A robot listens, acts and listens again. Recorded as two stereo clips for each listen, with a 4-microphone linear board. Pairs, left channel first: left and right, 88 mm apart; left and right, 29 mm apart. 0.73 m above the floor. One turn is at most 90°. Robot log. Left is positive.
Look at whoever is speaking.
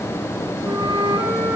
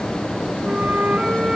cmd idle
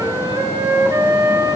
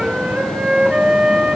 cmd idle
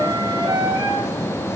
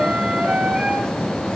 end: I can't make out anyone speaking to turn to.